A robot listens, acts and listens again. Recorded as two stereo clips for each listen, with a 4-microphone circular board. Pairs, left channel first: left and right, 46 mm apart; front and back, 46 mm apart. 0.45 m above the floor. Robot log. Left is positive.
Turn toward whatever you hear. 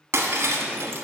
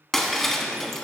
note: The breaking glass: 80° right.
cmd yaw -80
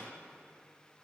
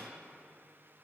end: Facing where the breaking glass came from. I can't hear it now.